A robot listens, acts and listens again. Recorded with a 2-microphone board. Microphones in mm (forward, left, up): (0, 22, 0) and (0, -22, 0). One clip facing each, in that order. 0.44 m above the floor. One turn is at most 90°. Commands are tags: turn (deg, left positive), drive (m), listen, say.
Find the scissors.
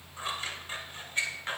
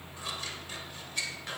<turn deg="30"/>
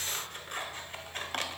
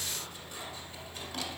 <turn deg="90"/>
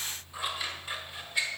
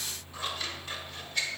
<turn deg="15"/>
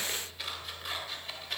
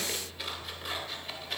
<say>Found it: scissors, straight ahead.</say>